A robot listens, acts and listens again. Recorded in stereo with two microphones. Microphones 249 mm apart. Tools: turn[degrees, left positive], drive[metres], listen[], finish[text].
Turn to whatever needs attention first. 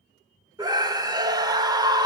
Thought: The scream: about 15° right or 165° right.
Action: turn[-15]
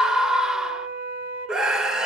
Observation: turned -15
Action: finish[Found it: a scream, straight ahead, 1 to 2 m away.]